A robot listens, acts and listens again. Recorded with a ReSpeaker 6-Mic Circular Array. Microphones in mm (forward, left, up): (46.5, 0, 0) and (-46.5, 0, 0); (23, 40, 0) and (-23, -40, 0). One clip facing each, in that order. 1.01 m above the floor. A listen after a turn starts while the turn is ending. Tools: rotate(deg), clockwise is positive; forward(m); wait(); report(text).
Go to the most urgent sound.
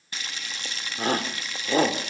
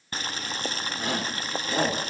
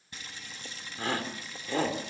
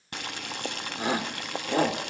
rotate(45)
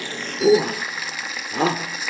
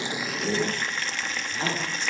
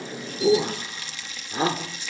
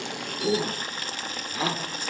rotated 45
forward(1.0)
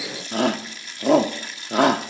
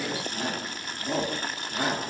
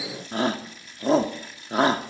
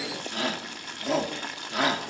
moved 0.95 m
forward(1.0)
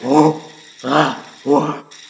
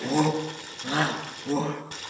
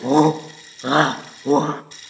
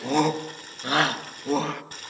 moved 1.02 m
forward(1.0)
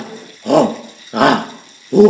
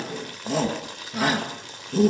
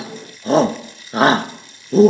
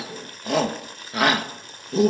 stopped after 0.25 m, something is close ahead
report("Arrived at the shout, straight ahead.")